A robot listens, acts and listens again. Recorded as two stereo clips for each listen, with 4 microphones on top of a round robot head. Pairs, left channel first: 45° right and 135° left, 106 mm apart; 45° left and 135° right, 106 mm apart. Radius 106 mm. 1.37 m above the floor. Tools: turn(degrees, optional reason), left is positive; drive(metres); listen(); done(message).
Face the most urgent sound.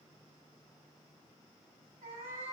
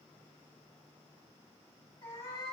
listen()
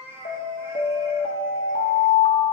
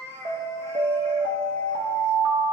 turn(degrees=-80, reason="The alarm: 80° right.")
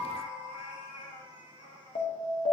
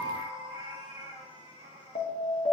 done("Facing the alarm, 1 to 2 m away.")